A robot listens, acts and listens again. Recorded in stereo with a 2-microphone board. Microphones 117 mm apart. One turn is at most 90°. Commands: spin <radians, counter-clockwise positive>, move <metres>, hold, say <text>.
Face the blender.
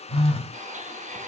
spin -1.57
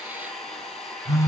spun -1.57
say Found it: a blender, straight ahead, 1 to 2 m away.